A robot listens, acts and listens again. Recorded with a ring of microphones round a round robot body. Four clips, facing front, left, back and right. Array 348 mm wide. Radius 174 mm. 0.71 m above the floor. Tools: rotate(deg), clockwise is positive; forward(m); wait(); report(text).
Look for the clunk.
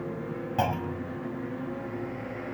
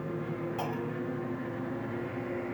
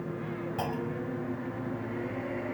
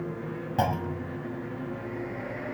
rotate(55)
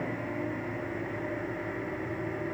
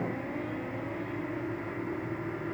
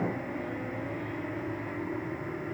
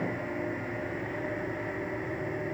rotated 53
report("Facing where the clunk came from. I can't hear it now.")